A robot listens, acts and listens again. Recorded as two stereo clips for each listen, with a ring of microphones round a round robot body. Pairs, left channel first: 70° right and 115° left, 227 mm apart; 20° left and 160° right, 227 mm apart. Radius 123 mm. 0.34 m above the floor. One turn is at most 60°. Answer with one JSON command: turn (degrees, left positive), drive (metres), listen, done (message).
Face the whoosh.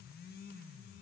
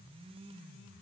{"listen": true}
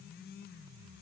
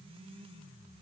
{"listen": true}
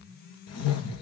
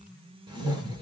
{"turn": -60}
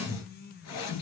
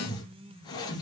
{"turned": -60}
{"turn": -50}
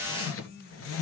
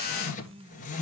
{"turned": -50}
{"turn": -35}
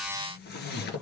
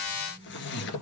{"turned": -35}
{"turn": -20}
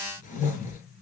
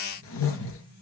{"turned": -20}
{"turn": -10}
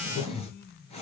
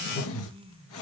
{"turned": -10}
{"done": "Facing the whoosh."}